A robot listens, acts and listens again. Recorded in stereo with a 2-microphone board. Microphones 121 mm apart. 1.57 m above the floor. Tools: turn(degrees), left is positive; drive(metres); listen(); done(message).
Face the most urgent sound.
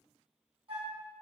listen()
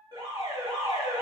turn(degrees=-40)
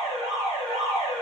turn(degrees=-95)
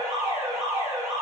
turn(degrees=-20)
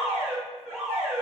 done("Facing the alarm, 1 to 2 m away.")